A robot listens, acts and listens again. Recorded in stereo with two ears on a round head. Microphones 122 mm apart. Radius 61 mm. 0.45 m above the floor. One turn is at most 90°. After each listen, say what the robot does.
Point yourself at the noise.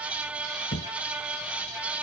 Turn 90° left.
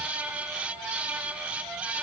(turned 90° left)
I heard a thud from this way, but can't make it out now.